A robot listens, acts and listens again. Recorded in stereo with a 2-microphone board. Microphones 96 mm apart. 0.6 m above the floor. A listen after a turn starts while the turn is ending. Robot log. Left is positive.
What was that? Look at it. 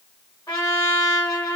note: The trumpet: about 45° left or 135° left.
cmd yaw +45
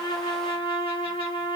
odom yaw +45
note: So it is at 90° left.
cmd yaw +90
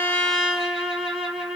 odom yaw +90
note: The trumpet is now 10° right.
cmd yaw -10
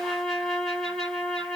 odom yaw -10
end: Found it: a trumpet, straight ahead.